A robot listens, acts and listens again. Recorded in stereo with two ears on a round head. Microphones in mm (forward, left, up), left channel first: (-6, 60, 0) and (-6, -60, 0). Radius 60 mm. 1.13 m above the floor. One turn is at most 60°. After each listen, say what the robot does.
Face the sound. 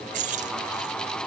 Turn 60° right.
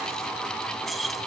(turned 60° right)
Found it: keys jangling, straight ahead.